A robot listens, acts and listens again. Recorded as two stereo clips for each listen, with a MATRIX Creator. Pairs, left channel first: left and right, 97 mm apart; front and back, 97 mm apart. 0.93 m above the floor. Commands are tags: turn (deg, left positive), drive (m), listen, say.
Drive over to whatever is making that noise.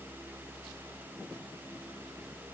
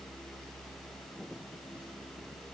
<listen/>
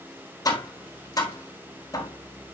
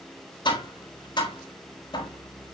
<turn deg="35"/>
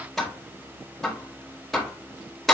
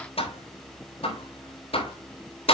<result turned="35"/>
<drive m="1.0"/>
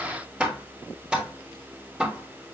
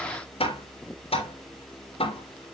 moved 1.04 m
<turn deg="-10"/>
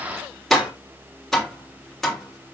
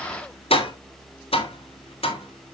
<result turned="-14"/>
<drive m="1.0"/>
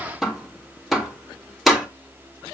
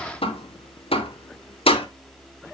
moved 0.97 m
<drive m="1.0"/>
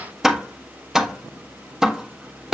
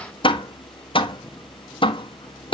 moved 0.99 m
<drive m="1.0"/>
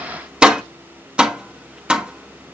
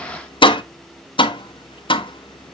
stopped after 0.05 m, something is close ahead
<turn deg="-15"/>
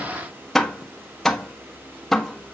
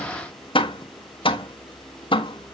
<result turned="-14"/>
<say>I am next to the tapping.</say>